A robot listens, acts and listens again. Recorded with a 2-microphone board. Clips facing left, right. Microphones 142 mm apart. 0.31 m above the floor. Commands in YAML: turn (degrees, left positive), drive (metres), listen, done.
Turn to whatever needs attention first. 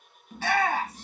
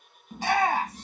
turn: -30
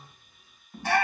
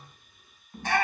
turn: 15
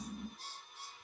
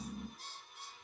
listen: true
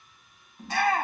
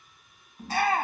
done: "Facing the shout, 2 to 4 m away."